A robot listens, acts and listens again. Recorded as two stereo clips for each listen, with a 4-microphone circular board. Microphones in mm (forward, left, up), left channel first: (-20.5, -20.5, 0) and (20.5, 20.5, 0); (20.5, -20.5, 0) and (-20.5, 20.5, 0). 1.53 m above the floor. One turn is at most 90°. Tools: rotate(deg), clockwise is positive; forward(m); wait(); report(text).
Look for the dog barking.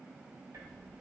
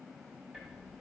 wait()
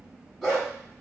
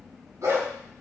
rotate(-90)
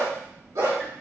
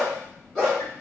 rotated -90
rotate(-40)
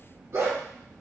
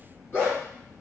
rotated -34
report("Found it: a dog barking, straight ahead, over 4 m away.")